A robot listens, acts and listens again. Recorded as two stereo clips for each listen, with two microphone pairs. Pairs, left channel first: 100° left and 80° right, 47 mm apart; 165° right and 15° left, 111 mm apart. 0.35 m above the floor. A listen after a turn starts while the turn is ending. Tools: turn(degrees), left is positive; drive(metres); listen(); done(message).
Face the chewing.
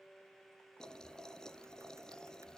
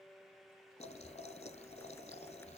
listen()
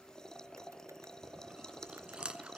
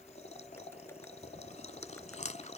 turn(degrees=-155)
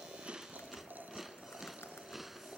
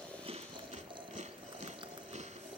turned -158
done("Facing the chewing.")